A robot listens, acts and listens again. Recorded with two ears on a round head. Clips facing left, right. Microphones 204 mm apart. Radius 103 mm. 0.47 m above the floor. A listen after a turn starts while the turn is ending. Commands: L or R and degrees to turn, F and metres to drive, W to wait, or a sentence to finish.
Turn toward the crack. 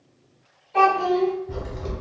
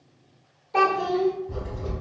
L30
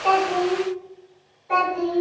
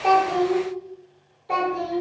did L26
W
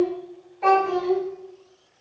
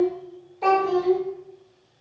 I heard a crack, but can't make it out now. It was about straight ahead or 125° left.